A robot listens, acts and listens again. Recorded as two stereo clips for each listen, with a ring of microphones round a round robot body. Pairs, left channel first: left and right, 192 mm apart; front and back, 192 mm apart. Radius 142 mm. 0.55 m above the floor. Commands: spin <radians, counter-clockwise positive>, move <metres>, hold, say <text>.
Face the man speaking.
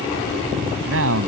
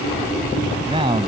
spin -1.83
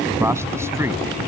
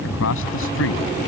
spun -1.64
spin -0.26
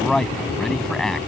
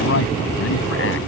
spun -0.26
say Found it: a man speaking, straight ahead.